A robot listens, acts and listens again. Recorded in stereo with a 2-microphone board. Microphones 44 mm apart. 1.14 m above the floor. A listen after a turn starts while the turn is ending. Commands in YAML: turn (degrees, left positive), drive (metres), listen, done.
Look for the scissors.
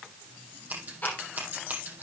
turn: -40
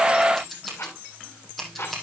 done: "Found it: scissors, straight ahead."